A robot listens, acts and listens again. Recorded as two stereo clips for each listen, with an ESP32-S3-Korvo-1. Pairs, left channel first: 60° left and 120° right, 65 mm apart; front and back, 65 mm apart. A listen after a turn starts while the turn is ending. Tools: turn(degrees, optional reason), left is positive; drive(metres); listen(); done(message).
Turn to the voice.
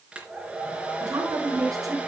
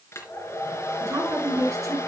turn(degrees=-145, reason="The woman speaking: 145° right.")
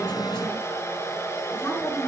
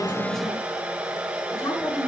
turn(degrees=10, reason="The woman speaking is now 10° left.")
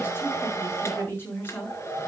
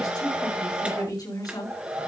done("Found it: a woman speaking, straight ahead.")